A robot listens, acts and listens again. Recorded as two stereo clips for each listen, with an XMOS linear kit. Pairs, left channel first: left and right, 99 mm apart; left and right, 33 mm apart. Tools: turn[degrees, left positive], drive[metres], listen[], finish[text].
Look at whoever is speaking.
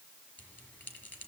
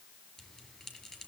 Action: listen[]
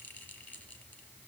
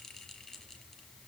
Action: listen[]
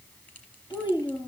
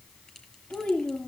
Thought: The child speaking: about 50° left or 130° left.
Action: turn[50]
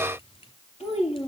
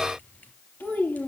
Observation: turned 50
Thought: So it is at 80° left.
Action: turn[80]
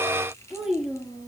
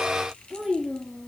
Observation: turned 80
Action: finish[Found it: a child speaking, straight ahead, over 4 m away.]